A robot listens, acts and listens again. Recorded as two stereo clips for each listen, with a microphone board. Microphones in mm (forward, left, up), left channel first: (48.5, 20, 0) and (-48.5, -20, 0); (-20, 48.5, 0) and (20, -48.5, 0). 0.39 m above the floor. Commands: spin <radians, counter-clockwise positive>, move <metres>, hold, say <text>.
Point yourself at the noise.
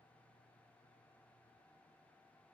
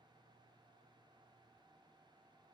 hold
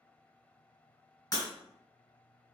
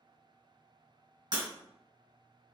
spin -0.61
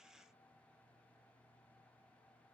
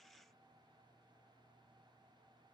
say I heard breaking glass from this way, but can't make it out now.